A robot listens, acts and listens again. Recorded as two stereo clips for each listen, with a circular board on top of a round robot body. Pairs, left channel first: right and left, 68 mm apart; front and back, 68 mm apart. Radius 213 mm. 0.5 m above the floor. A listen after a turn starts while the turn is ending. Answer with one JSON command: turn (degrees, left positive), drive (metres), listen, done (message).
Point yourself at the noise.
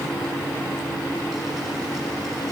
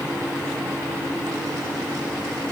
{"listen": true}
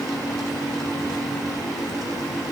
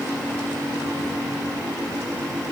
{"listen": true}
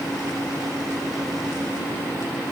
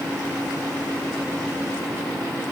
{"done": "I can't make out anything."}